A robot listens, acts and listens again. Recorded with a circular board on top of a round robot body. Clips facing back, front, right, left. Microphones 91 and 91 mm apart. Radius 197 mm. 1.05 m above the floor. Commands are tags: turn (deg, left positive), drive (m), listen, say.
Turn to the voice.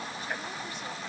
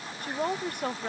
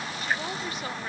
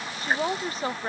<turn deg="35"/>
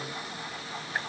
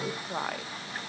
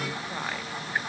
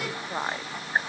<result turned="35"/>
<turn deg="20"/>
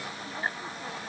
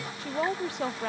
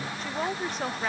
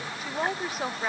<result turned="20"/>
<say>Facing the woman speaking.</say>